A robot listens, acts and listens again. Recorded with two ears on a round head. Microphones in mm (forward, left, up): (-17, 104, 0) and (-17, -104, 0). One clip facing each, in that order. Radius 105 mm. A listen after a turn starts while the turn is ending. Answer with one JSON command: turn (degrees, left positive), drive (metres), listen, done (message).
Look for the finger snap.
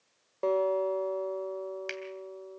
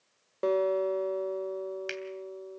{"turn": -30}
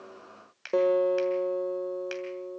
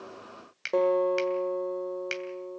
{"turn": -145}
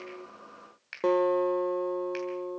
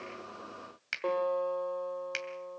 {"turn": -60}
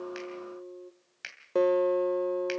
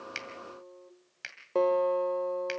{"done": "Facing the finger snap."}